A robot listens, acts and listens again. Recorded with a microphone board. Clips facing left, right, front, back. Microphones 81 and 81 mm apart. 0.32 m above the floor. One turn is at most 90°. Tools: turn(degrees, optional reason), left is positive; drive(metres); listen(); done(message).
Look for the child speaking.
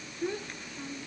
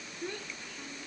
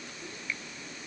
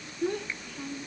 turn(degrees=90, reason="The child speaking: 165° left.")
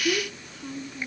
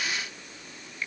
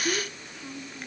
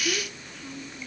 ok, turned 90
turn(degrees=85, reason="The child speaking is now 85° left.")
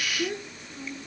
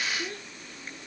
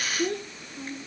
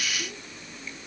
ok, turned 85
turn(degrees=20, reason="The child speaking is now 20° left.")
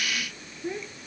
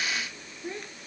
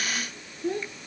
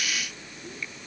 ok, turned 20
done("Found it: a child speaking, straight ahead.")